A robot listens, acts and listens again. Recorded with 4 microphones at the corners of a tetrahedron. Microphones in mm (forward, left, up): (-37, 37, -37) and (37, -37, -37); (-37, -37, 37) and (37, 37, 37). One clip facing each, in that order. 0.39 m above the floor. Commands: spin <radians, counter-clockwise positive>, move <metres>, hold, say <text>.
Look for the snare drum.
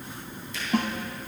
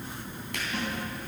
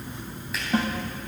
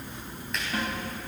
spin 2.97
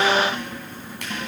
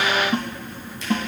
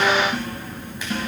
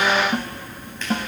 say Facing the snare drum.